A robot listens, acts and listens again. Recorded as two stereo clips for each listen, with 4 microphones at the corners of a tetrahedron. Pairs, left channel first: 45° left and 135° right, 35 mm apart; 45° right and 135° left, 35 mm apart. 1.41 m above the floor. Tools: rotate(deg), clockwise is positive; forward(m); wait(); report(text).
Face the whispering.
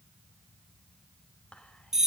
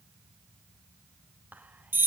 rotate(-100)
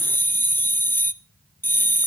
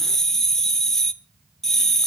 wait()
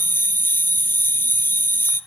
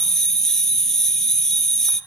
wait()
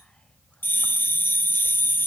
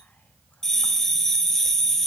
report("Facing where the whispering came from. I can't hear it now.")